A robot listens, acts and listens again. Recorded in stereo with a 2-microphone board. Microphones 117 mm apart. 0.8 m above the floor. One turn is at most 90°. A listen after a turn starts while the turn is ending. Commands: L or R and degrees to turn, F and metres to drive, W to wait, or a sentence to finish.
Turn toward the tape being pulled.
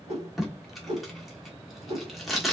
L30
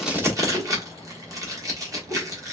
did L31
R30
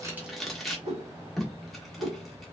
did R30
Found it: tape being pulled, straight ahead.